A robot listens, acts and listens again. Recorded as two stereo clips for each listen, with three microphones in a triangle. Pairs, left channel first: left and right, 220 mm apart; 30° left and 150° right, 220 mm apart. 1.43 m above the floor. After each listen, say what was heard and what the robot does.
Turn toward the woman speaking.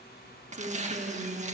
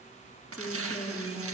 The woman speaking: 35° right. Turn 35° right.
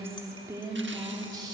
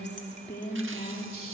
The woman speaking is now 20° right. Turn 20° right.
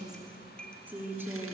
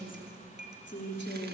The woman speaking is now 10° right. Turn 10° right.
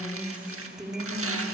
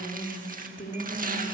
The woman speaking is now 10° right. Turn 10° right.
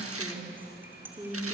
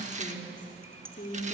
The woman speaking is now 10° right. Turn 10° right.
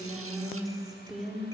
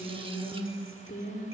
Facing the woman speaking, 2 to 4 m away.